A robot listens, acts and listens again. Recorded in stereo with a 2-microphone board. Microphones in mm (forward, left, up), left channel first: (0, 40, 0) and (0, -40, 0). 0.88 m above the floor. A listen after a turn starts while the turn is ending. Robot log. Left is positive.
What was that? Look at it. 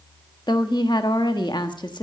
note: The woman speaking: about 70° left or 110° left.
cmd yaw +70
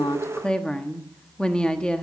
note: So it is at 10° left.
cmd yaw +10
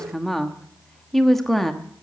end: Facing the woman speaking.